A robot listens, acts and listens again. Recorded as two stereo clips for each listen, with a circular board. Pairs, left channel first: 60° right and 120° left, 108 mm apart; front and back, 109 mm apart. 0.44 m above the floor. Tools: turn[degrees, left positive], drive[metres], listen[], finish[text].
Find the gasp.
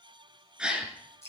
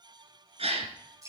Thought: The gasp: 160° right.
Action: turn[-160]
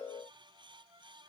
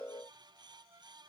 Action: finish[I heard a gasp from this way, but can't make it out now.]